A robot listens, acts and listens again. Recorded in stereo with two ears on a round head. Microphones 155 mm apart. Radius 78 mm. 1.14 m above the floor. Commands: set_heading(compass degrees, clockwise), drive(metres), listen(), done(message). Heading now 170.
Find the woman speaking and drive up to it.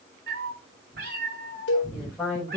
set_heading(140)
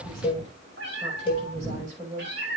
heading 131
set_heading(171)
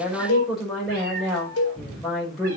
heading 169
drive(1.0)
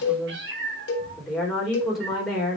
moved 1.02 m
drive(1.0)
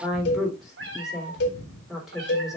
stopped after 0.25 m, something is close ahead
done("Something is in my way. I am facing the woman speaking but have not reached it.")